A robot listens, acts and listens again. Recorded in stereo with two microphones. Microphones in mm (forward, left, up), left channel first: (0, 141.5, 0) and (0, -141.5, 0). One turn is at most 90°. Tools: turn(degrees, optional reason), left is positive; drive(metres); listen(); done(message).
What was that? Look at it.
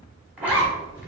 turn(degrees=-30)
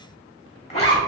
turn(degrees=25, reason="So it is at 25° left.")
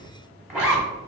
done("Found it: a zipper, straight ahead.")